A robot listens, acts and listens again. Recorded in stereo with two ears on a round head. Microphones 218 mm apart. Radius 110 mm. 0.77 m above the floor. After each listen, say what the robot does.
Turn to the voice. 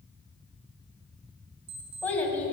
Turn 30° left.
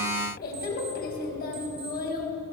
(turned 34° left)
Turn 140° left.
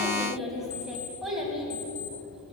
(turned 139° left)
Facing the child speaking, 2 to 4 m away.